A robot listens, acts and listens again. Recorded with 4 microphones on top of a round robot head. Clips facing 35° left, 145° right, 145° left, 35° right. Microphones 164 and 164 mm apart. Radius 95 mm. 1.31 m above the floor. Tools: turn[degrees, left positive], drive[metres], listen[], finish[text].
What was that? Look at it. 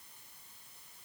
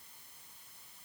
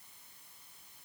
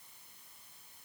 Action: listen[]
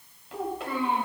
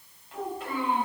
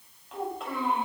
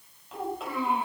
Thought: The child speaking: 55° left.
Action: turn[55]
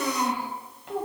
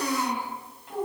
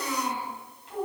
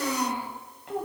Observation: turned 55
Action: finish[Found it: a child speaking, straight ahead.]